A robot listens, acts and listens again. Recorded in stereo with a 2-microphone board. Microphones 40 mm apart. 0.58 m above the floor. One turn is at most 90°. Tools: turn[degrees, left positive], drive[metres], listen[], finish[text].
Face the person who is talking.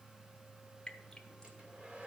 Action: listen[]
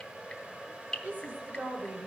Thought: The woman speaking: about 55° right or 125° right.
Action: turn[-55]
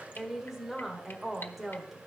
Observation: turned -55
Thought: So it is at 10° right.
Action: turn[-10]
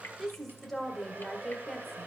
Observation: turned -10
Action: finish[Facing the woman speaking, 1 to 2 m away.]